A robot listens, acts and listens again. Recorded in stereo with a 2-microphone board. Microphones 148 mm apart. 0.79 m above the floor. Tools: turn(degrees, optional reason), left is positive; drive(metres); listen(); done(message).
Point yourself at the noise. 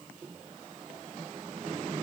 listen()
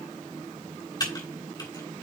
turn(degrees=25, reason="The typing on a keyboard: about 25° left or 155° left.")
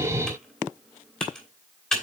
done("Facing the typing on a keyboard, 2 to 4 m away.")